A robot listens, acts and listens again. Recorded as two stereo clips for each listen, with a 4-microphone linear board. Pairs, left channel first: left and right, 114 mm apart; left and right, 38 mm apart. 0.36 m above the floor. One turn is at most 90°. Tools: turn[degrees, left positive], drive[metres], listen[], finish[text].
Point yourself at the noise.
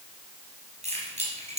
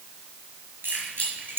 Thought: The keys jangling: about 75° right or 105° right.
Action: turn[-75]
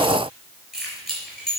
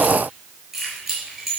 Action: finish[Facing the keys jangling, over 4 m away.]